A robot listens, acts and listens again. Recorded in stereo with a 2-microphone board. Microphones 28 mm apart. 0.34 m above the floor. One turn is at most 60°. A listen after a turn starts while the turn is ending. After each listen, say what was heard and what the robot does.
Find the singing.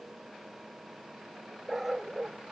Keep listening.
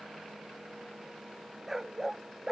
Keep listening.
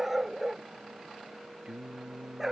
The singing: about 20° right or 160° right. Turn 20° right.
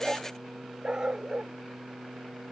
Turn 30° left.
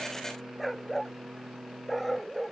So it is at 30° right. Turn 30° right.
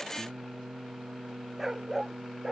The singing is now 20° right. Turn 20° right.
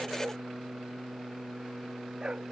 Facing the singing.